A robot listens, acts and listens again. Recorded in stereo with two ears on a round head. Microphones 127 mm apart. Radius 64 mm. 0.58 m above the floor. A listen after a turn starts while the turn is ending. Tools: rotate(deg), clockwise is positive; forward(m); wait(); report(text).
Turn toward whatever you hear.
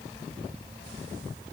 wait()
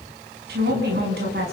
rotate(75)
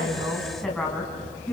report("Facing the woman speaking.")